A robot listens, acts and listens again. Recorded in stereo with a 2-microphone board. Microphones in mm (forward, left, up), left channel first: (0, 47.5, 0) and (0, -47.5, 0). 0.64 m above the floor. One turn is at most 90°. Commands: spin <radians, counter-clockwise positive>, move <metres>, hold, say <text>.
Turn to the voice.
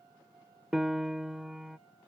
hold
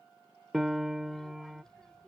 spin 0.52
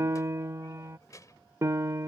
spin 1.57
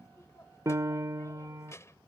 spin 0.52
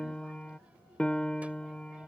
spin -0.26
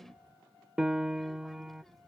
say Facing the child speaking.